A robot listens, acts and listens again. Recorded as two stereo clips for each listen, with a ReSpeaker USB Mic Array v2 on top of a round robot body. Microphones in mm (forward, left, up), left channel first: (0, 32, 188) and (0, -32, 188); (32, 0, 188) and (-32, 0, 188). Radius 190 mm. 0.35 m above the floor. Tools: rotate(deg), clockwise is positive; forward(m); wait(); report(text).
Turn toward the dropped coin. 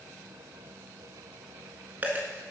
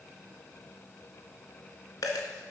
rotate(25)
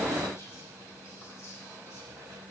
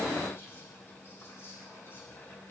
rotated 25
report("Facing where the dropped coin came from. I can't hear it now.")